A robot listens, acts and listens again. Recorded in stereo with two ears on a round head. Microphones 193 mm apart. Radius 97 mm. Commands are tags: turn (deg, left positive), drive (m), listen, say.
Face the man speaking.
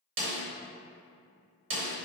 <listen/>
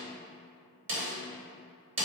<listen/>
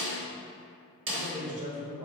<turn deg="-30"/>
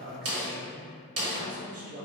<turn deg="-40"/>
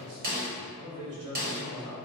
<turn deg="-100"/>
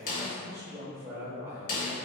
<turn deg="-10"/>
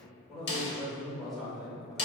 <say>Facing the man speaking.</say>